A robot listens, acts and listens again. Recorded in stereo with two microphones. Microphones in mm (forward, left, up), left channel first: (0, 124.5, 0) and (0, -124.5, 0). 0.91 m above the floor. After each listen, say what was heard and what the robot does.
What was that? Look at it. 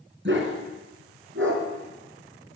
The dog barking: about 55° right or 125° right. Turn 55° right.
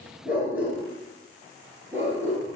So it is at 10° right. Turn 10° right.
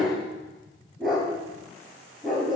Found it: a dog barking, straight ahead.